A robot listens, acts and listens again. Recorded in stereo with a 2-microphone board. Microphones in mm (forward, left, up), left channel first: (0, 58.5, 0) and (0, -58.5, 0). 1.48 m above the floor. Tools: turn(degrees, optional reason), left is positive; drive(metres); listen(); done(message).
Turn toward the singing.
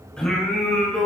turn(degrees=30)
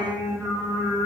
turn(degrees=-15, reason="So it is at 15° right.")
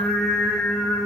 done("Facing the singing.")